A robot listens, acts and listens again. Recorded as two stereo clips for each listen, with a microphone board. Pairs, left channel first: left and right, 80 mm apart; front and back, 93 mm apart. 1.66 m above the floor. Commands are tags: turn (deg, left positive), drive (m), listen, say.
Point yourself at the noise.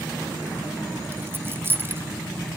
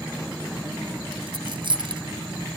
<turn deg="-150"/>
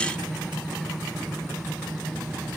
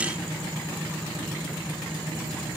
<say>I heard a dropped coin from this way, but can't make it out now.</say>